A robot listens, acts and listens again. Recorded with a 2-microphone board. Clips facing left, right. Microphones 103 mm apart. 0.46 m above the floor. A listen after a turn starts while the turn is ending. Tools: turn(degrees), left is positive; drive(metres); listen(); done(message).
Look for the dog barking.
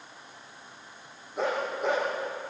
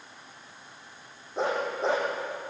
turn(degrees=-30)
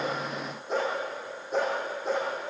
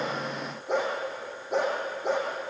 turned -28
turn(degrees=-115)
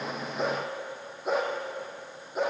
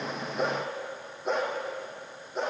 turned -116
done("Found it: a dog barking, straight ahead.")